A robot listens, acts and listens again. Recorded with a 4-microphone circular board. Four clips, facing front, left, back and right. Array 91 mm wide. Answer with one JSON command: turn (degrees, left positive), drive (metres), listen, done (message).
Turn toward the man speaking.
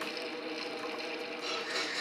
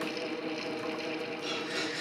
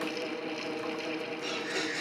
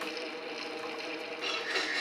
{"listen": true}
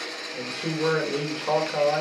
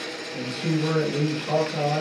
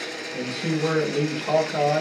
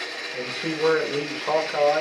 {"turn": -50}
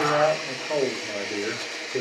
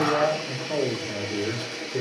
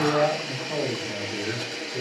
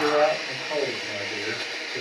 {"turn": 15}
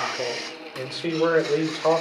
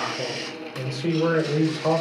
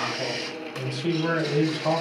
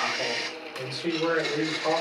{"turn": 10}
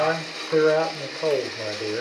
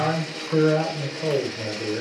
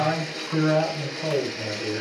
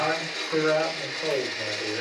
{"done": "Found it: a man speaking, straight ahead."}